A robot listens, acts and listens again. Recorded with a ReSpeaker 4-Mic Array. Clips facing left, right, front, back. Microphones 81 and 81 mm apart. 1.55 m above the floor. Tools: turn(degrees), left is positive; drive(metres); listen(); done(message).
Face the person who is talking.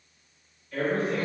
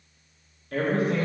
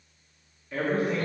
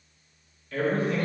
turn(degrees=-75)
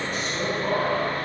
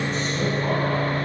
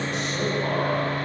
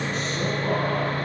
listen()
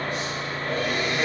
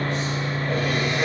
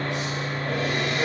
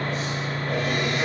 listen()
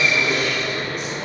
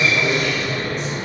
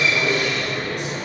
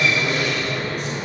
done("Facing where the man speaking came from. I can't hear it now.")